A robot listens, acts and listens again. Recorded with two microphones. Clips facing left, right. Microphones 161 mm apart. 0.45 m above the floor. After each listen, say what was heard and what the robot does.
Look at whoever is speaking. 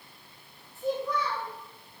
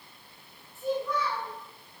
The child speaking: about 20° left or 160° left. Turn 20° left.
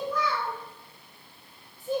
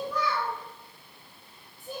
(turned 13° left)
Facing the child speaking, 1 to 2 m away.